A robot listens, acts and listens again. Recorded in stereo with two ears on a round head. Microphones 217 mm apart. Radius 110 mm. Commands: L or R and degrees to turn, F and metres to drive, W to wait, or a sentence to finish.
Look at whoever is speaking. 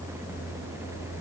W
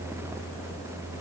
W
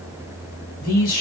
L40
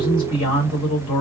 L95
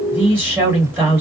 R10
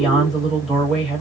Found it: a man speaking, straight ahead, 1 to 2 m away.